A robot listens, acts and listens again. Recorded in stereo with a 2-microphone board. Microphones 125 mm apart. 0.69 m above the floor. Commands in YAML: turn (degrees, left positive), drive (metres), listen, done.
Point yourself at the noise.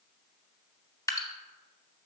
turn: 30
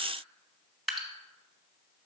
done: "Found it: dripping, straight ahead."